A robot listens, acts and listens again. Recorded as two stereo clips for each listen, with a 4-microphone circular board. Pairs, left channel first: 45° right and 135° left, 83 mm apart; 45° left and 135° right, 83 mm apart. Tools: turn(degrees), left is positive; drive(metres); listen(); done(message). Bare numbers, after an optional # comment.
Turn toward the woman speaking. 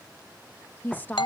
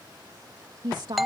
# The woman speaking: 110° right.
turn(-110)
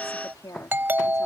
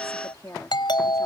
done("Found it: a woman speaking, straight ahead.")